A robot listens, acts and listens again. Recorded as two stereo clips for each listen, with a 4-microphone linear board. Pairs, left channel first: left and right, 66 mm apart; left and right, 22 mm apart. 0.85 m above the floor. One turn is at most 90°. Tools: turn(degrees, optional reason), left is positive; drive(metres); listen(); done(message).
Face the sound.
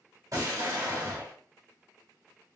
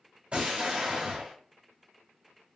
turn(degrees=-65, reason="The explosion: about 65° right or 115° right.")
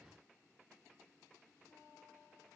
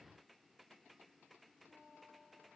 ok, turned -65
listen()
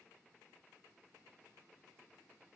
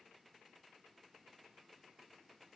done("I heard an explosion, but can't make it out now. It was about straight ahead or 50° right.")